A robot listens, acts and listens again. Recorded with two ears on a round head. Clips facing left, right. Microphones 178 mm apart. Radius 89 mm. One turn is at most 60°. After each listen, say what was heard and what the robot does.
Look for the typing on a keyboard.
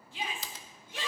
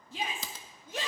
Turn 60° right.
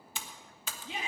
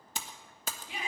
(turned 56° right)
So it is at 35° right. Turn 35° right.
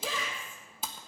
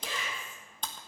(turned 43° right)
Facing the typing on a keyboard, 1 to 2 m away.